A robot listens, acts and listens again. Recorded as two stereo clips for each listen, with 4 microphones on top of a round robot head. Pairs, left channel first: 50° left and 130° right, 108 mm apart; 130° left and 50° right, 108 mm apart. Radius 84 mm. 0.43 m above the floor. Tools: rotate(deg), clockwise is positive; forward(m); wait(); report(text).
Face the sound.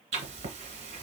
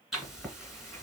rotate(140)
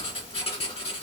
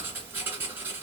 rotate(-20)
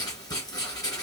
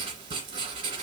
report("Found it: writing, straight ahead.")